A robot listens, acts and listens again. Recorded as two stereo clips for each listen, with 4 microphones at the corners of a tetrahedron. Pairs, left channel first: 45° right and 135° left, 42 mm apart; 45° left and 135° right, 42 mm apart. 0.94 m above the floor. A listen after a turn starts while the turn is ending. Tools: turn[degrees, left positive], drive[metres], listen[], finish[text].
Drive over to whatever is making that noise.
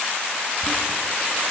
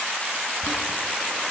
Action: drive[1.0]
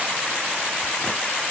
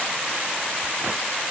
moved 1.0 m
Action: listen[]
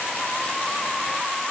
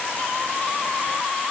Action: listen[]
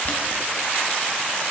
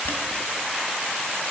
Action: drive[1.0]
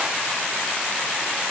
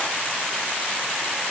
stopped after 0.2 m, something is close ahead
Action: listen[]
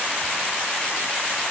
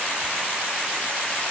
Action: listen[]
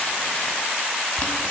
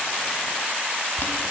Thought: The boiling is now 10° left.
Action: turn[10]
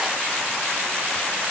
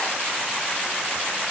Action: listen[]
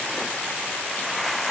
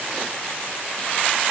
Action: listen[]
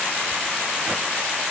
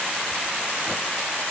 Action: finish[I heard boiling from this way, but can't make it out now. I did not reach it.]